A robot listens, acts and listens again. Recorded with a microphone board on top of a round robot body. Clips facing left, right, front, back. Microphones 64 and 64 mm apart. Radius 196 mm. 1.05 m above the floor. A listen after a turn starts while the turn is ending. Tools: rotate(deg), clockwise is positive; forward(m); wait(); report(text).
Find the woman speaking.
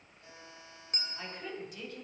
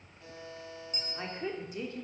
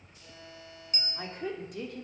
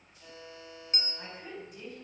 rotate(30)
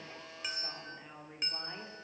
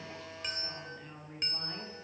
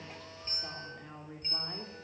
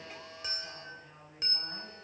rotate(-10)
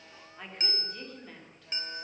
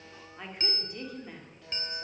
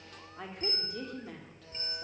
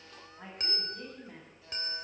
rotate(10)
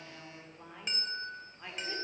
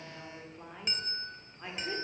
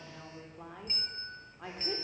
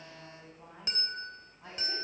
rotate(10)
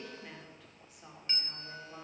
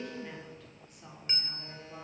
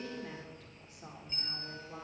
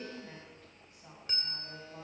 report("Facing the woman speaking.")